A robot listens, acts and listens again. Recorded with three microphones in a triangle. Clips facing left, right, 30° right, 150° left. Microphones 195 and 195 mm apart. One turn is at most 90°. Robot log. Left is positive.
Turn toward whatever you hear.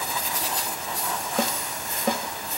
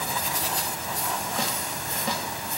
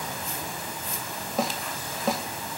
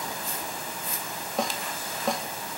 note: The snare drum: 55° left.
cmd yaw +55
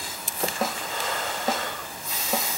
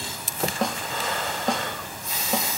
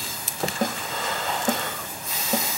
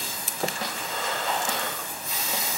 end: Found it: a snare drum, straight ahead, 1 to 2 m away.